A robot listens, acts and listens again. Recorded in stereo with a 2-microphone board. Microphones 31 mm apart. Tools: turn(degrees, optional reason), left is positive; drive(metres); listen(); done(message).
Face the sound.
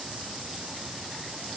listen()
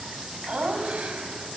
turn(degrees=-45, reason="The laughter: about 45° right or 135° right.")
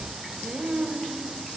turn(degrees=-40, reason="The laughter: about 40° right or 140° right.")
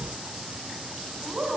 turn(degrees=-45, reason="The laughter: about 45° right or 135° right.")
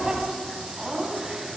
turn(degrees=-15, reason="So it is at 15° right.")
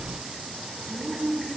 done("Found it: laughter, straight ahead, 2 to 4 m away.")